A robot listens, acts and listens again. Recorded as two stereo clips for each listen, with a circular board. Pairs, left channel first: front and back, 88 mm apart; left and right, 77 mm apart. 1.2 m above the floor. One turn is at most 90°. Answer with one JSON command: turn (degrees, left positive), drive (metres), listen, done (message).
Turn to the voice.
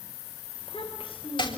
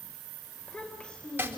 {"turn": 15}
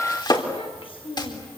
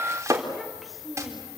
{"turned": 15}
{"done": "Facing the child speaking."}